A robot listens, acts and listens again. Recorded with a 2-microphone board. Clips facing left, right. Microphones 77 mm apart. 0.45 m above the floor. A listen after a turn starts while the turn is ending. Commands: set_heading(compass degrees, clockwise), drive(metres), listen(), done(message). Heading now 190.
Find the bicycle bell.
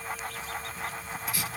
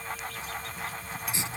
listen()
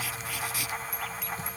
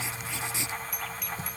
set_heading(165)
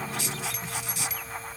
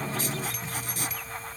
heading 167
listen()
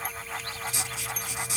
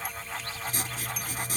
listen()
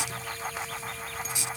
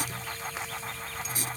done("I heard a bicycle bell, but can't make it out now. It was about 5° left or 130° left.")